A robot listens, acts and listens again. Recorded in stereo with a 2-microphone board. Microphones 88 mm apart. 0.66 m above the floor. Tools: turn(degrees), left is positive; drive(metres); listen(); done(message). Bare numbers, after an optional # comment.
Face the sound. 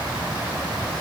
listen()
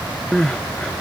turn(30)
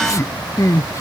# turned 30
# So it is at 140° left.
turn(140)
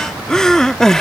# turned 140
# The crying is now 10° left.
turn(10)
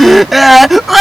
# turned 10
done("Found it: crying, straight ahead.")